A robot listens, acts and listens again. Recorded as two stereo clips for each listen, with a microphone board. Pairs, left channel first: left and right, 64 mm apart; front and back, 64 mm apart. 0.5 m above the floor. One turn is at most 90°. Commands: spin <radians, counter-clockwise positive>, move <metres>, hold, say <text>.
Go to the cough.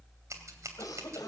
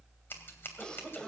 spin 1.31
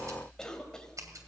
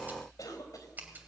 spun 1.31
spin 0.17
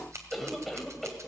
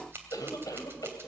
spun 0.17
move 1.0
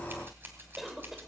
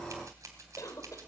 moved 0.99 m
move 1.0
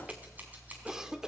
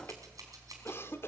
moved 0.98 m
spin -0.26
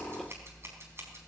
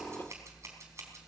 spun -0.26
hold
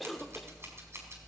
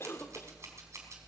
move 1.0
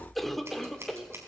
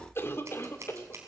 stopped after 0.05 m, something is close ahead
say I am next to the cough.